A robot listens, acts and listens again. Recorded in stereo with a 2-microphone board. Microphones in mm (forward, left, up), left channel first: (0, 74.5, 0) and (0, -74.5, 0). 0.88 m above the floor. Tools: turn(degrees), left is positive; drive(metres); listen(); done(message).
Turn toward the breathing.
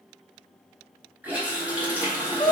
turn(degrees=40)
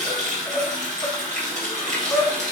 done("Facing the breathing, under 1 m away.")